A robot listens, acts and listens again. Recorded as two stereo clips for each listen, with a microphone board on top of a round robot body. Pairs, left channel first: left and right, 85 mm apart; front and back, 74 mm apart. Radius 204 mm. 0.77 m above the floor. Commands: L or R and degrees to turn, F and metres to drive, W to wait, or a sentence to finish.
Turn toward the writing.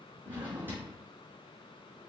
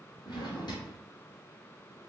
W
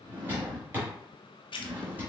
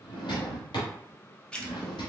L75
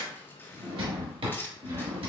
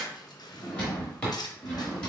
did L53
L25
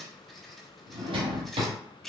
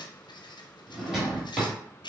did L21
Facing the writing.